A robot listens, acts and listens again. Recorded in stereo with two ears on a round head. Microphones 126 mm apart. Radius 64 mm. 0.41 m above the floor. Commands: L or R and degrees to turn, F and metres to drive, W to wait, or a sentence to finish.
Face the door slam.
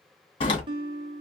L40
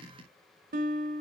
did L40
W
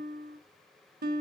I heard a door slam, but can't make it out now. It was about straight ahead or 100° left.